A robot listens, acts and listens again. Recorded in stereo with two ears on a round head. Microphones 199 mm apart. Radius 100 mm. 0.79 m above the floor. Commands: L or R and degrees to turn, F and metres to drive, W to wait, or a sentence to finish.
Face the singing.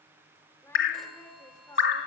L20
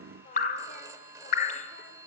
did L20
L140
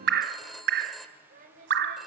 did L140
R40
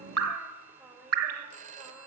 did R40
Found it: singing, straight ahead, over 4 m away.